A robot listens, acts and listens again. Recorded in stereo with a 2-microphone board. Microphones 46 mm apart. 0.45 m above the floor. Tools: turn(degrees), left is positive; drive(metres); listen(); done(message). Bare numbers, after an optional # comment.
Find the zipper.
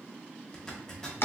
turn(30)
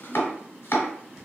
listen()
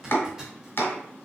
# So it is at 15° right.
turn(-15)
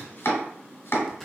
done("Found it: a zipper, straight ahead.")